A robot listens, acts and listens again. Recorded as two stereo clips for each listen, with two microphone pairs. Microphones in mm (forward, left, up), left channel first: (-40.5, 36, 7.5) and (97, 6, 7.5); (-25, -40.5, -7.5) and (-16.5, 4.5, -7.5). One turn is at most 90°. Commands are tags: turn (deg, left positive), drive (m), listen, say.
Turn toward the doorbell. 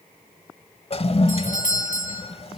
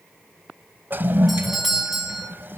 <turn deg="90"/>
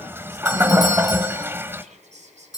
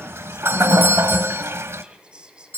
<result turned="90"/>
<turn deg="90"/>
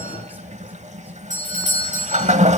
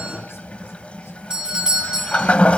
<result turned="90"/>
<say>Found it: a doorbell, straight ahead, over 4 m away.</say>